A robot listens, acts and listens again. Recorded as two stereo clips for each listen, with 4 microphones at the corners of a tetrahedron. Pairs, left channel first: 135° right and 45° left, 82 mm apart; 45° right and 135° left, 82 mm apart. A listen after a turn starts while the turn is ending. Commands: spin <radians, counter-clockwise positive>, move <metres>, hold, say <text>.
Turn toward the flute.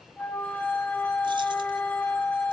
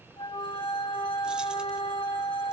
spin -1.13
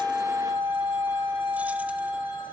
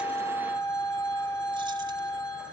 say Facing the flute.